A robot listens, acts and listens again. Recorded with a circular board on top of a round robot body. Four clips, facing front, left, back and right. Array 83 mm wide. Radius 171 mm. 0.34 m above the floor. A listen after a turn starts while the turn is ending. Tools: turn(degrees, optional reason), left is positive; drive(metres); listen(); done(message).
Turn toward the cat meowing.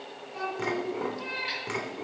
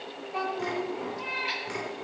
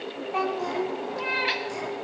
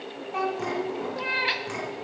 turn(degrees=-130, reason="The cat meowing: 130° right.")
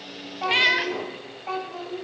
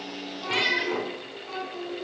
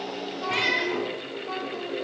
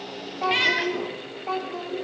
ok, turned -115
turn(degrees=-15, reason="The cat meowing is now 15° right.")
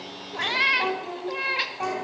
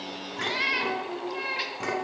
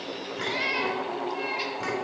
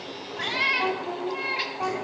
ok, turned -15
done("Found it: a cat meowing, straight ahead.")